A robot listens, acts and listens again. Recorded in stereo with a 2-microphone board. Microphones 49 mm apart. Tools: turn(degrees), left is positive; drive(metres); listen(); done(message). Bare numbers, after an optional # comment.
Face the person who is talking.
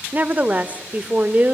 # The woman speaking: about 35° right or 145° right.
turn(-35)
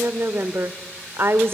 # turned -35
# So it is at 105° right.
turn(-105)
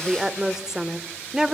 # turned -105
# The woman speaking is now 15° right.
turn(-15)
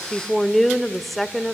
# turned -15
done("Found it: a woman speaking, straight ahead.")